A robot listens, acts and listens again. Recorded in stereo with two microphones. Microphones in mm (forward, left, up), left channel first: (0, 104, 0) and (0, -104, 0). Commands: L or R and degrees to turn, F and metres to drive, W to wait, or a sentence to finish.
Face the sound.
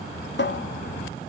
L55
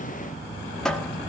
Found it: a cupboard door, straight ahead, 1 to 2 m away.